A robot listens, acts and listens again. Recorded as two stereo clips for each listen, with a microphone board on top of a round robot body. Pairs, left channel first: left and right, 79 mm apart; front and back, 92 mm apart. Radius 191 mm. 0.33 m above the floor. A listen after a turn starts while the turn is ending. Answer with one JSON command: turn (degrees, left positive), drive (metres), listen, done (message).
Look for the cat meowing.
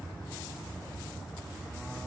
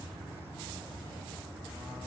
{"listen": true}
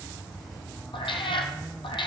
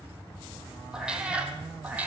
{"turn": 105}
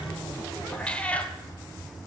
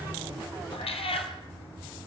{"turn": 15}
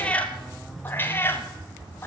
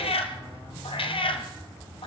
{"turn": 25}
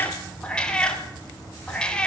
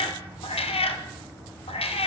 {"turn": 10}
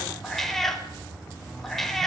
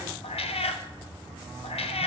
{"done": "Found it: a cat meowing, straight ahead."}